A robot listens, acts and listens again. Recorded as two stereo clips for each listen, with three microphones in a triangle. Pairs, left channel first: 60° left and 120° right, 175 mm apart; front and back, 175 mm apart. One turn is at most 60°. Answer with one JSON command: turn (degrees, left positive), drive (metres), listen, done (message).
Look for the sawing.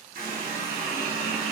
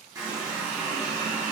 {"listen": true}
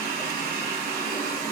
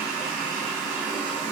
{"listen": true}
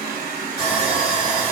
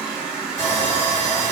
{"turn": -50}
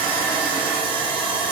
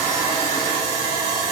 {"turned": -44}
{"turn": -10}
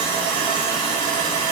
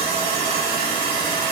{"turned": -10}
{"done": "Found it: sawing, straight ahead."}